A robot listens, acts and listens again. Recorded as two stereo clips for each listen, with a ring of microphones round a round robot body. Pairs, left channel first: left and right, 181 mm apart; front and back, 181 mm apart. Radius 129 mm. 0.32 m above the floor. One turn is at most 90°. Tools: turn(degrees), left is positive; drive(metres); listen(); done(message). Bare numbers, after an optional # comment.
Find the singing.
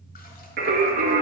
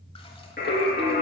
# The singing: 60° right.
turn(-60)
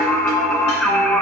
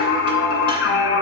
done("Found it: singing, straight ahead.")